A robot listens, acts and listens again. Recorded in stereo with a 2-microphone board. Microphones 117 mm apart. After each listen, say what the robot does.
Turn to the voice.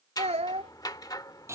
Turn 70° right.
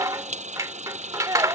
Turn 35° right.
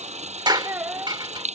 Turn 25° right.
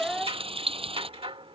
Facing the child speaking.